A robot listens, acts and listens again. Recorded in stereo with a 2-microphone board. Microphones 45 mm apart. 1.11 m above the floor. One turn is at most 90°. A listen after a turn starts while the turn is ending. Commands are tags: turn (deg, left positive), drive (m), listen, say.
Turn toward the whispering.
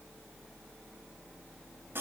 <listen/>
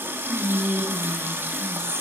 <turn deg="15"/>
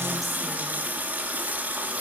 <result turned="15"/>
<listen/>
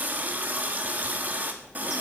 <listen/>
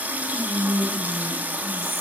<say>Facing the whispering.</say>